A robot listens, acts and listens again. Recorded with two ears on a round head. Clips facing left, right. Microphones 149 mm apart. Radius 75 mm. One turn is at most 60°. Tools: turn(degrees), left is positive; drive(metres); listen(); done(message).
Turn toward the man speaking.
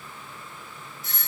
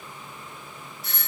listen()
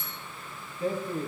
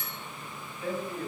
turn(degrees=35)
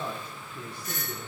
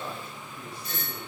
turn(degrees=60)
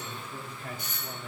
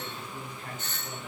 turn(degrees=60)
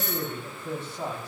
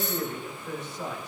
turn(degrees=25)
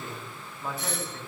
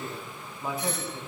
turn(degrees=-10)
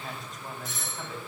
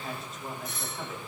done("Found it: a man speaking, straight ahead.")